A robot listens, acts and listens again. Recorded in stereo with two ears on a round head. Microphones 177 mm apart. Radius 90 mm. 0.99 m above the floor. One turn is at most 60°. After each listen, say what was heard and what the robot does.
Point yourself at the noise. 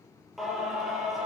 Turn 30° left.
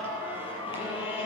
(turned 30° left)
So it is at 150° left. Turn 60° left.
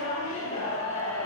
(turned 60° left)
The singing is now 90° left. Turn 60° left.
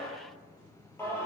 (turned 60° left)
The singing is now 15° left. Turn 15° left.
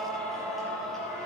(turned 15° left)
Found it: singing, straight ahead, over 4 m away.